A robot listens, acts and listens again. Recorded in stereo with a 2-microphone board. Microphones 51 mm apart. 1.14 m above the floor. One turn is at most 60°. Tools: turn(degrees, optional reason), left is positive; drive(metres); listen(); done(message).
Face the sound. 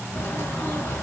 turn(degrees=55, reason="The bird: about 55° left or 125° left.")
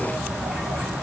done("Facing the bird, 2 to 4 m away.")